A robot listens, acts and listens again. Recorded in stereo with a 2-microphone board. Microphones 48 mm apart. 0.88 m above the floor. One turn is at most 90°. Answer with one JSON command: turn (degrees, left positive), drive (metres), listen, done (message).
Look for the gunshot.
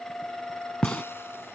{"turn": 30}
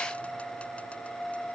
{"listen": true}
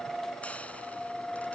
{"done": "I heard a gunshot, but can't make it out now. It was about 15° right or 135° left."}